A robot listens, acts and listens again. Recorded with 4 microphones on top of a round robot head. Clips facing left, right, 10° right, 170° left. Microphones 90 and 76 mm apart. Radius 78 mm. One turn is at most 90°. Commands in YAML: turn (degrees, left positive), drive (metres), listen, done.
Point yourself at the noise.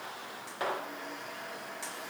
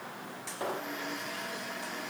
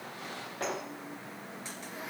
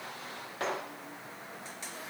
listen: true
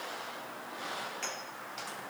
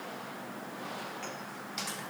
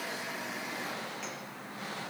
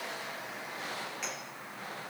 listen: true
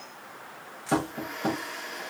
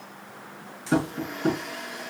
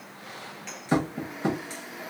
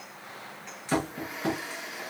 turn: 55
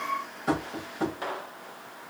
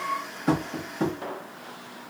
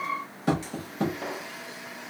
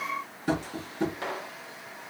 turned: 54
done: "Facing the tapping."